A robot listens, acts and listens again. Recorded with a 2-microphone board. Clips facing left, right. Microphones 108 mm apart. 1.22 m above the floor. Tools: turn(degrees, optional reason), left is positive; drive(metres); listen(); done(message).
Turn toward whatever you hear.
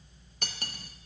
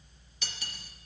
turn(degrees=50, reason="The cutlery clinking: about 50° left or 130° left.")
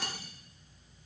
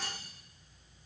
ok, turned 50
turn(degrees=75, reason="So it is at 75° left.")
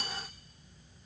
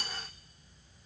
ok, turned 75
done("Facing the cutlery clinking, under 1 m away.")